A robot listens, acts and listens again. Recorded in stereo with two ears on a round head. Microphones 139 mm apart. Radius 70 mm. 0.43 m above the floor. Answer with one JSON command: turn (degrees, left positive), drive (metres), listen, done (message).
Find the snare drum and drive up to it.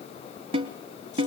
{"turn": -40}
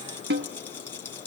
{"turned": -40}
{"turn": -100}
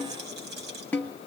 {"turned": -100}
{"turn": 10}
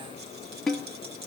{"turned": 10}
{"drive": 1.0}
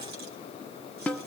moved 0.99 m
{"turn": 10}
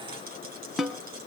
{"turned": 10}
{"drive": 1.0}
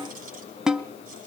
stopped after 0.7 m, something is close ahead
{"done": "Arrived at the snare drum, straight ahead."}